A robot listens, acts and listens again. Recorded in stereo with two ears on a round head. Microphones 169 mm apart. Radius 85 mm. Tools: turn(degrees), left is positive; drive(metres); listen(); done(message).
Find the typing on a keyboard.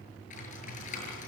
turn(degrees=40)
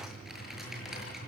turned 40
done("Facing the typing on a keyboard, over 4 m away.")